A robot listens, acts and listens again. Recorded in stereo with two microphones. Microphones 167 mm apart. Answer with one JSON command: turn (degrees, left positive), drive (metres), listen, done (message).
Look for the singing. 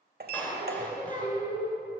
{"turn": 45}
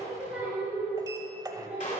{"turn": -10}
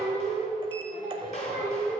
{"turn": -10}
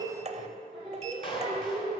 {"done": "Facing the singing, over 4 m away."}